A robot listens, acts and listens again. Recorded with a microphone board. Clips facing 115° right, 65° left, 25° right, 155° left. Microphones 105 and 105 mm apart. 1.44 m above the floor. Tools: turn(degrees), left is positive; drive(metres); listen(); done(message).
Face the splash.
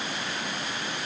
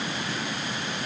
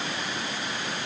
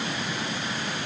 listen()
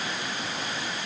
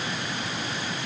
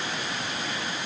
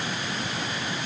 listen()
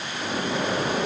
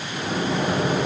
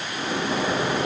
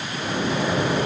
turn(degrees=50)
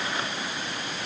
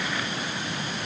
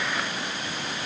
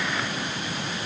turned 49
done("Facing where the splash came from. I can't hear it now.")